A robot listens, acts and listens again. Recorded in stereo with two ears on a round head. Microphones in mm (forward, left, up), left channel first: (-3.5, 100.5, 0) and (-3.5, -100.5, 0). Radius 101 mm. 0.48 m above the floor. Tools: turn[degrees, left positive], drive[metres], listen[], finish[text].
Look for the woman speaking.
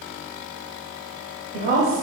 Thought: The woman speaking: about 45° right or 135° right.
Action: turn[-45]
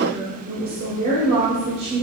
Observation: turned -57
Thought: So it is at 25° right.
Action: turn[-25]
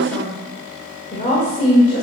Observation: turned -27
Thought: The woman speaking is now 40° left.
Action: turn[40]
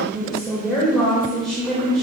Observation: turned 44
Action: finish[Facing the woman speaking.]